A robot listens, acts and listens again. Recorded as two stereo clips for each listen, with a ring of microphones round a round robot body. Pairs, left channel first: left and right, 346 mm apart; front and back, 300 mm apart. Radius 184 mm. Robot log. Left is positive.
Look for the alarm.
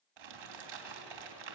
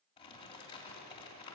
cmd idle
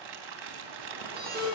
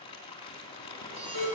note: The alarm: 155° right.
cmd yaw -155
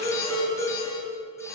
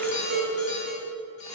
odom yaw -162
end: Facing the alarm, over 4 m away.